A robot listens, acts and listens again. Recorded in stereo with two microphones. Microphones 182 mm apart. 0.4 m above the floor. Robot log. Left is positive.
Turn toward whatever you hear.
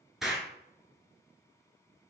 cmd yaw +30
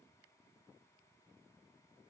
cmd idle
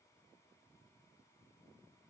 end: I heard an explosion, but can't make it out now. It was about 30° right or 150° left.